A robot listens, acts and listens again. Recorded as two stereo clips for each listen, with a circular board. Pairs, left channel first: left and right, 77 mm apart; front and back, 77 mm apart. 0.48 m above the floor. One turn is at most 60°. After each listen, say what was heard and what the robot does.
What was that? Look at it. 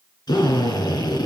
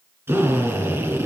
The drill: 120° left. Turn 60° left.
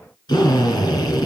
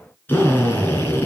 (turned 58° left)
The drill is now 65° left. Turn 60° left.
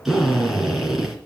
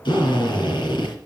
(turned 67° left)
Found it: a drill, straight ahead.